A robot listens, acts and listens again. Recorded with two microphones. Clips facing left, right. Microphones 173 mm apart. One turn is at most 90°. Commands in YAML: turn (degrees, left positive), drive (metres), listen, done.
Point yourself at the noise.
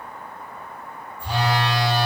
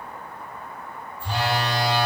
turn: 30
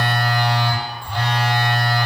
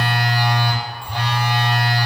turn: -15
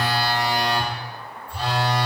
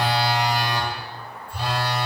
done: "Facing the phone buzzing, 1 to 2 m away."